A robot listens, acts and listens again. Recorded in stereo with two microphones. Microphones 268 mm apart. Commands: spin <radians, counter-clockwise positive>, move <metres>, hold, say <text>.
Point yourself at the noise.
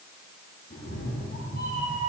spin 0.52
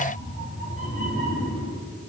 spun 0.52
spin 2.36
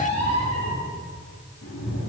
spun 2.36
spin 1.31
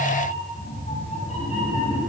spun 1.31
spin 0.44
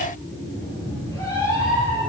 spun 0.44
spin 0.26
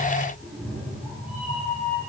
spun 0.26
say Facing the cat meowing, over 4 m away.